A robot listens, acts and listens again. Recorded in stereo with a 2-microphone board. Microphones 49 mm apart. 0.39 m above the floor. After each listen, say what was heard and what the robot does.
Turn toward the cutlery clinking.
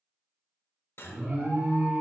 The cutlery clinking: about 60° left or 120° left. Turn 60° left.
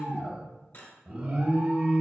So it is at 50° left. Turn 50° left.
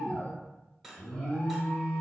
Found it: cutlery clinking, straight ahead, under 1 m away.